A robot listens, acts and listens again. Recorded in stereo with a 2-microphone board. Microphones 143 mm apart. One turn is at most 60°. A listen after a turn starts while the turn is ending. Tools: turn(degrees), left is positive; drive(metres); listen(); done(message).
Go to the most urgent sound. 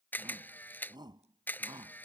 turn(degrees=-30)
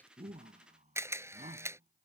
turn(degrees=-60)
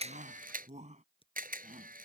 turn(degrees=-60)
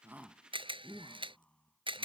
turn(degrees=10)
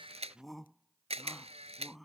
drive(metres=1.0)
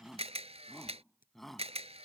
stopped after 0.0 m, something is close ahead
done("Something is in my way. I am facing the shout but have not reached it.")